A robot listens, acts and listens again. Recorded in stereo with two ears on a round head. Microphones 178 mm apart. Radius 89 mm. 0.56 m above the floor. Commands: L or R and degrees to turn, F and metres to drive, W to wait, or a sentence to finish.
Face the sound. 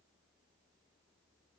W
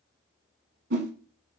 R55
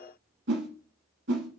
R65
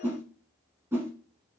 R15
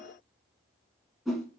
Facing the whoosh.